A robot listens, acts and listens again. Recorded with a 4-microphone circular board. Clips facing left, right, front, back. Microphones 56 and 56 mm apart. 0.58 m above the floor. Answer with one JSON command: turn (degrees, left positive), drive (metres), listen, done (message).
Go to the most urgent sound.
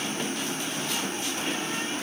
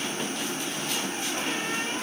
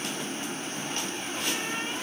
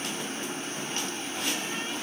{"listen": true}
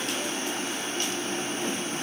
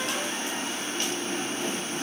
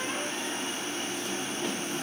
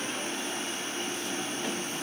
{"listen": true}
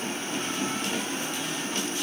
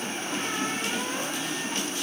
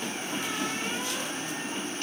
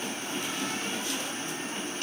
{"done": "I can't make out anything urgent to turn to."}